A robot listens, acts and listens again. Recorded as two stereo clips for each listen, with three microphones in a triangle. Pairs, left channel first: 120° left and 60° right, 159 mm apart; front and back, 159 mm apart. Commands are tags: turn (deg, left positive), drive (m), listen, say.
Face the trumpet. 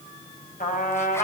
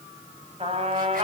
<turn deg="135"/>
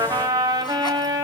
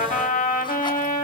<say>Facing the trumpet.</say>